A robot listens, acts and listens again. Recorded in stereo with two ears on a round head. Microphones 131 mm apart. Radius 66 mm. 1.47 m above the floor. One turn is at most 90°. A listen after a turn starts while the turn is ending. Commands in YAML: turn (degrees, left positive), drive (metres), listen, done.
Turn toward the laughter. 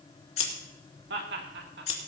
turn: -90
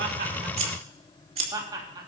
turn: -30
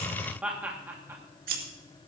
turn: -15
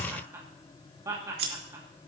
turn: -20
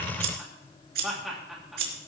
done: "Facing the laughter."